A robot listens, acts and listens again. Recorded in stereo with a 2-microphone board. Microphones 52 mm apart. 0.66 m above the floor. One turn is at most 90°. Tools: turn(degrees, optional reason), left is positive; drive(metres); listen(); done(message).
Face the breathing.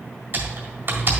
listen()
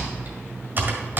listen()
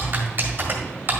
done("I can't make out breathing to turn to.")